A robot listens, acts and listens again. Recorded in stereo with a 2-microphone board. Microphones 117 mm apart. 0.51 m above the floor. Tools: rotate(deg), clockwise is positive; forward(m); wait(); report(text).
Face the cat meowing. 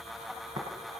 wait()
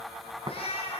rotate(-55)
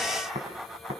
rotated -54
wait()
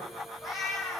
report("Facing the cat meowing.")